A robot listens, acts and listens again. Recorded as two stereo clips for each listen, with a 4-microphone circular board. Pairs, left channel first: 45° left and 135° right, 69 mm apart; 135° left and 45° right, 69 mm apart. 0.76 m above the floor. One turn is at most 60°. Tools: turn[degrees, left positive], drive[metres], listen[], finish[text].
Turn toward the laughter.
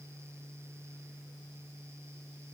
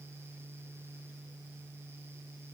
Action: listen[]
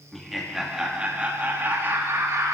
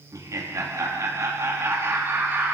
Thought: The laughter: 100° right.
Action: turn[-60]
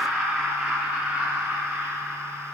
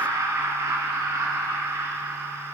Thought: The laughter is now 70° right.
Action: turn[-60]
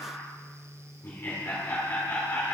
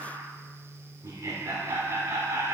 Thought: The laughter is now 10° right.
Action: turn[-10]
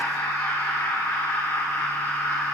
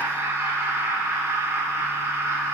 Action: finish[Found it: laughter, straight ahead, 2 to 4 m away.]